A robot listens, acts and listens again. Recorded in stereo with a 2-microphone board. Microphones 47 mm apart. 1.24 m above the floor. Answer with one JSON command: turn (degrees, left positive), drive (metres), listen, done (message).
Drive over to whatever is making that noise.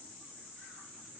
{"listen": true}
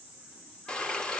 {"turn": 20}
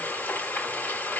{"turn": 140}
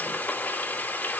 {"turn": 35}
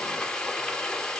{"turn": 10}
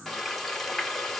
{"drive": 1.0}
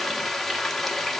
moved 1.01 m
{"drive": 1.0}
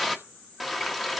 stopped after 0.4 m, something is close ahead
{"done": "I am next to the frying."}